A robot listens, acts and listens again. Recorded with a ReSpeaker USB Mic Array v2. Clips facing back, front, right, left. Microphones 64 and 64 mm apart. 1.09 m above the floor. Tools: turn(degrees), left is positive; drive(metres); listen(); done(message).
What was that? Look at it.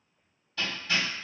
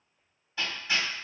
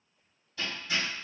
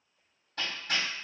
turn(degrees=70)
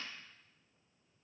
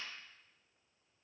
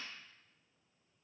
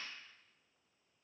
listen()
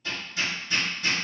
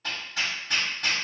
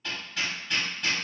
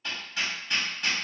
done("Facing the hammering, 1 to 2 m away.")